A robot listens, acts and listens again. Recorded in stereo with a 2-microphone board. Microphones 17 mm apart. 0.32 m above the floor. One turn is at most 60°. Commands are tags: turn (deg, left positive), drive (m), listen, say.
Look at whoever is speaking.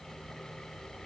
<listen/>
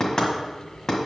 <listen/>
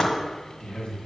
<turn deg="55"/>
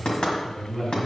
<turn deg="55"/>
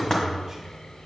<listen/>
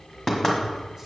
<listen/>
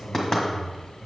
<say>Facing the man speaking, 2 to 4 m away.</say>